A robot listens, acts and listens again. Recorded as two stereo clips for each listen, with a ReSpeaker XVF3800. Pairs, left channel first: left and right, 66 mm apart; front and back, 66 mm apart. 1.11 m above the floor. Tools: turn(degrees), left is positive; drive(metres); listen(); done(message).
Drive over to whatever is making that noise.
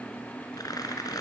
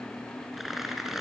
turn(degrees=95)
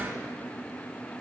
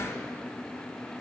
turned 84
turn(degrees=10)
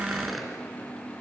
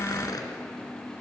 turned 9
drive(metres=1.0)
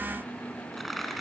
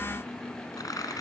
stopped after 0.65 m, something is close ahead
done("Something is in my way. I am facing the tearing paper but have not reached it.")